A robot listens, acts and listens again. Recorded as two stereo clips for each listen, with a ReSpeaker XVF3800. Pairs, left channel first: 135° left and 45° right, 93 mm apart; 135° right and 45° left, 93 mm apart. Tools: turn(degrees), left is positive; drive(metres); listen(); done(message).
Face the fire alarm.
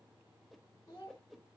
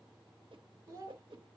listen()
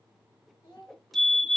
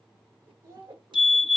turn(degrees=-45)
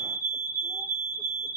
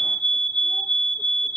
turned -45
done("Found it: a fire alarm, straight ahead, 2 to 4 m away.")